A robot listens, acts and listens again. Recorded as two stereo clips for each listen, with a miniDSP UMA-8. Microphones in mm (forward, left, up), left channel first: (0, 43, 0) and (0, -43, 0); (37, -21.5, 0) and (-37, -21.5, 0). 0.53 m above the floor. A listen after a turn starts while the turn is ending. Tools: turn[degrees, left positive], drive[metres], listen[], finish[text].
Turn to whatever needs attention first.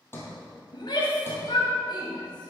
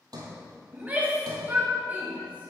Thought: The shout: 115° left.
Action: turn[115]
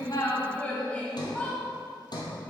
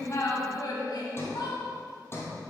Thought: The shout is now 15° left.
Action: turn[15]
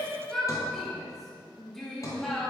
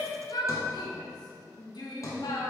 Action: finish[Facing the shout.]